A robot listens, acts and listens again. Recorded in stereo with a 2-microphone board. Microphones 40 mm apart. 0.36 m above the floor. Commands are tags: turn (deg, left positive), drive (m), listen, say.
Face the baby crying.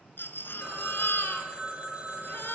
<turn deg="70"/>
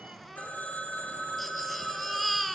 <say>Facing the baby crying, 2 to 4 m away.</say>